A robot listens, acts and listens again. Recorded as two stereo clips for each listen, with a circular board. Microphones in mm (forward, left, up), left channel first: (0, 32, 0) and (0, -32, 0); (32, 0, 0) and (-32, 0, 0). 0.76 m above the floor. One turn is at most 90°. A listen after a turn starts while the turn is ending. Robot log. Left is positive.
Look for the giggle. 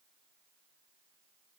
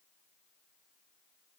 cmd idle
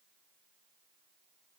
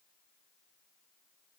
cmd idle
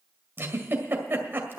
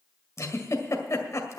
note: The giggle: 35° right.
cmd yaw -35
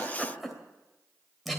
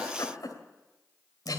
end: Found it: a giggle, straight ahead.